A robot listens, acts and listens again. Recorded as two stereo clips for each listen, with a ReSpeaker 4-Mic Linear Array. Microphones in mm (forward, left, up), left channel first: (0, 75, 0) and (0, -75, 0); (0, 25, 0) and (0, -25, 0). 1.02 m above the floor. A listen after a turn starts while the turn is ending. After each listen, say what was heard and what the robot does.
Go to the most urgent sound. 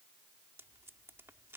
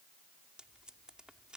Keep listening.
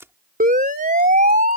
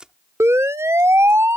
The siren: about 70° right or 110° right. Turn 70° right.
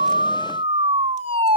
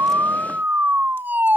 So it is at 40° right. Turn 40° right.
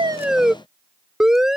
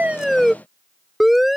Drive 1.0 m forward.
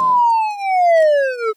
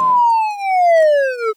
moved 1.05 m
Drive 1.0 m forward.
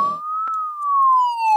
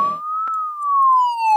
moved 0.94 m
Drive 1.0 m forward.
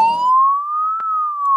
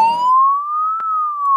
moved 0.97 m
Drive 1.0 m forward.
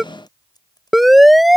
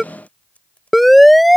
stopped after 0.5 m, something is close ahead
I am next to the siren.